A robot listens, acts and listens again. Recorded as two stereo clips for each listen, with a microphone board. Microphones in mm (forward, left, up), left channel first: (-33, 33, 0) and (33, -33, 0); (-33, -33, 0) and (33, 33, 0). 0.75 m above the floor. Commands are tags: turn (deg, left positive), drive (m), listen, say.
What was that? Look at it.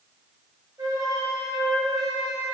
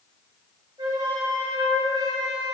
<say>Found it: a flute, straight ahead.</say>